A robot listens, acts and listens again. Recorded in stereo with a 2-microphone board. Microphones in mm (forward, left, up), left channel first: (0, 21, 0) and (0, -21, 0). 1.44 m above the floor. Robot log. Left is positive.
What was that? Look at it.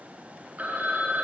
note: The phone ringing: about 40° right or 140° right.
cmd yaw -40
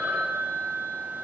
note: So it is at 95° right.
cmd yaw -95
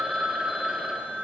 note: The phone ringing is now 15° right.
cmd yaw -15
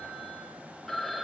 end: Facing the phone ringing, 1 to 2 m away.